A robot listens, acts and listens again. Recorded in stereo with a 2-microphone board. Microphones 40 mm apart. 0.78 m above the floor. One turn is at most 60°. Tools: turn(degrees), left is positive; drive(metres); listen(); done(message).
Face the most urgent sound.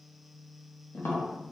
listen()
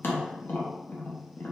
listen()
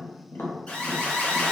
turn(degrees=35)
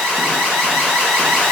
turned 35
done("Found it: an alarm, straight ahead, 1 to 2 m away.")